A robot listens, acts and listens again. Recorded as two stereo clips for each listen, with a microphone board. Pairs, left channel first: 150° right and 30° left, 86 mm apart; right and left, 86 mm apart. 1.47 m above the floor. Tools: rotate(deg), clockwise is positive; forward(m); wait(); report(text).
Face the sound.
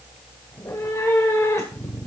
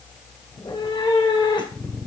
rotate(95)
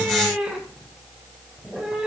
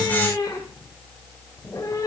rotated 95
rotate(50)
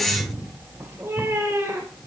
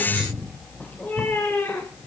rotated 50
rotate(25)
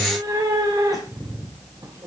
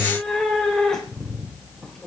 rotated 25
report("Found it: a cat meowing, straight ahead.")